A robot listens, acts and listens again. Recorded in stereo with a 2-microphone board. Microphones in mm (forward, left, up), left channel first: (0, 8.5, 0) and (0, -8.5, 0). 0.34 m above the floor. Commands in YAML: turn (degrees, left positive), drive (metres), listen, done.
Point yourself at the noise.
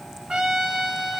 turn: -70
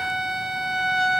done: "Found it: a trumpet, straight ahead, 1 to 2 m away."